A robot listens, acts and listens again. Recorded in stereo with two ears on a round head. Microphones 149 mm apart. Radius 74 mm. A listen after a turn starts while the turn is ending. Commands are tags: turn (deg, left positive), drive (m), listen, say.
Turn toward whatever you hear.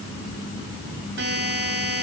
<turn deg="-75"/>
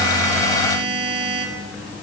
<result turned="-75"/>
<turn deg="-30"/>
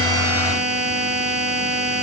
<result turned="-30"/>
<say>Facing the buzzer.</say>